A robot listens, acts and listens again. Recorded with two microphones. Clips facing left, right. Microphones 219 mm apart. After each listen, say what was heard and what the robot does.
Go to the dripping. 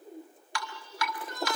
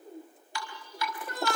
Turn 90° left.
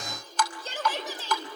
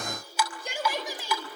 So it is at 10° right. Turn 10° right.
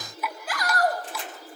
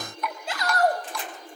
Drive 1.0 m forward.
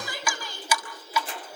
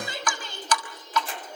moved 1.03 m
The dripping is now 10° left. Turn 10° left.
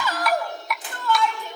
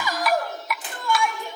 Drive 1.0 m forward.
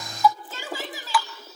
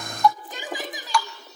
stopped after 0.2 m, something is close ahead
I am next to the dripping.